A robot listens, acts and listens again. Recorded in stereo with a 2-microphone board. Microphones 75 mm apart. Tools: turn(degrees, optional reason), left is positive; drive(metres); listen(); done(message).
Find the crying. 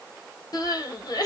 turn(degrees=60, reason="The crying: about 60° left or 120° left.")
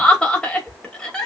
turn(degrees=10, reason="So it is at 10° left.")
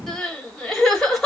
done("Facing the crying, 1 to 2 m away.")